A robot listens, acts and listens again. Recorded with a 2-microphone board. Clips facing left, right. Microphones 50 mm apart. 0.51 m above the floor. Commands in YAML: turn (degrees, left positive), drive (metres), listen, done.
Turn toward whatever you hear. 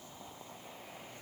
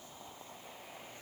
listen: true
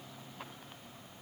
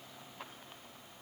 listen: true
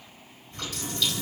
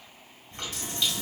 turn: -30
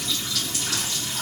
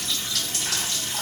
turn: -120
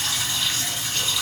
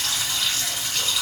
done: "Found it: a running tap, straight ahead, 1 to 2 m away."